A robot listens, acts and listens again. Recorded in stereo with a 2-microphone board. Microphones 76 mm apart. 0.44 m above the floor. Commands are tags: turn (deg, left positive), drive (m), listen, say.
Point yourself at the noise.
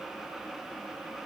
<listen/>
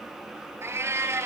<turn deg="-35"/>
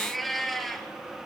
<say>Facing the cat meowing.</say>